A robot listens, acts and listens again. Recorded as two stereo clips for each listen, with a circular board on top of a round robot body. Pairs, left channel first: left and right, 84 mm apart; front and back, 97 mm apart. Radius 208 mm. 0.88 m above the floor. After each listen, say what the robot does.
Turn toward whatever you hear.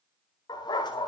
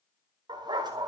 Turn 130° left.
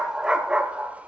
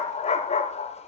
Turn 15° right.
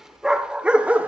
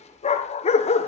Turn 15° right.
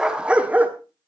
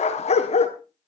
Turn 15° right.
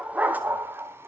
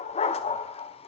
Turn 20° right.
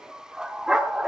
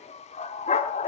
Found it: a dog barking, straight ahead.